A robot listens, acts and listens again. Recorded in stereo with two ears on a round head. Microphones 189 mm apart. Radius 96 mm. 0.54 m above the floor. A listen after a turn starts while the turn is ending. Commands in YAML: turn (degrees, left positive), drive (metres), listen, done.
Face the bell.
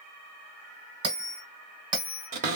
turn: -25
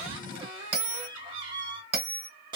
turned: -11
turn: -145
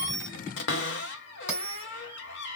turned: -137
done: "Found it: a bell, straight ahead."